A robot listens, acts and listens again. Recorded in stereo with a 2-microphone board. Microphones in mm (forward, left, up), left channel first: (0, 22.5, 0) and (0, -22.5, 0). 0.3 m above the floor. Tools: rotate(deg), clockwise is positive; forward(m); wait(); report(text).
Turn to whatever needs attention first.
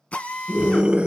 rotate(20)
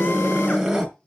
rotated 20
report("Facing the scream, 2 to 4 m away.")